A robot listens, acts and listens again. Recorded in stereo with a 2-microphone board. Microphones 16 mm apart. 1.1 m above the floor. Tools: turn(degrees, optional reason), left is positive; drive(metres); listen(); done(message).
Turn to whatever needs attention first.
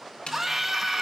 turn(degrees=-30)
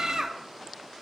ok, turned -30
turn(degrees=-135, reason="So it is at 135° right.")
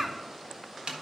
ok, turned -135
turn(degrees=-35, reason="The scream is now 35° right.")
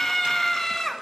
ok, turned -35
turn(degrees=15, reason="The scream is now 15° left.")
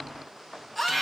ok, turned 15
done("Facing the scream.")